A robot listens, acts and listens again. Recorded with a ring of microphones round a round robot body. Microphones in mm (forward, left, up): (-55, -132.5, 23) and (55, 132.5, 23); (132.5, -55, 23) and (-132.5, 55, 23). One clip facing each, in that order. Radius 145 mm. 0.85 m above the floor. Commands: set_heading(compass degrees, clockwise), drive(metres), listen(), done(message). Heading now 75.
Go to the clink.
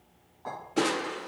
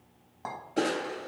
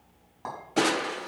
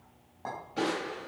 set_heading(30)
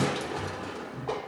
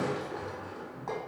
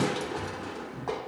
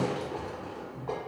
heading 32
listen()
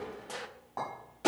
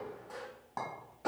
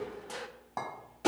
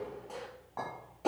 drive(1.0)
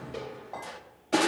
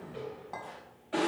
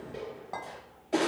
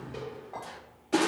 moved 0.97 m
drive(1.0)
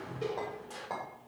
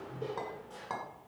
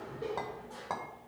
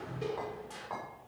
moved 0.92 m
drive(1.0)
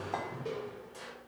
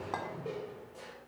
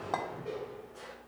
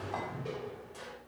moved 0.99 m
drive(1.0)
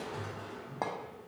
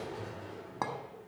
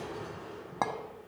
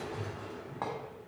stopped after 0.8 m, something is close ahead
done("I am next to the clink.")